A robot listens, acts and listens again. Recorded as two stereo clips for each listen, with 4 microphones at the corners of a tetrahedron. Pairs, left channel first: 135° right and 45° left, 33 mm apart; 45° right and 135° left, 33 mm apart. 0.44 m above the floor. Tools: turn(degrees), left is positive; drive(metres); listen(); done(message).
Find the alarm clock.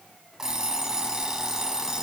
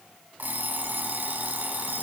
turn(degrees=115)
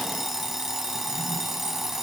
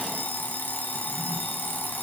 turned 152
turn(degrees=-35)
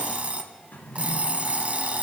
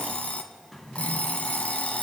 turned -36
done("Found it: an alarm clock, straight ahead, 1 to 2 m away.")